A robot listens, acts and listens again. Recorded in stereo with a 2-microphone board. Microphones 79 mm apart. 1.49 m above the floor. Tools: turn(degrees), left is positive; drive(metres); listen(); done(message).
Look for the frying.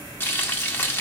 turn(degrees=25)
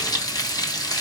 turn(degrees=125)
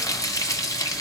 turn(degrees=45)
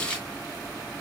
turn(degrees=15)
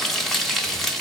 done("Found it: frying, straight ahead.")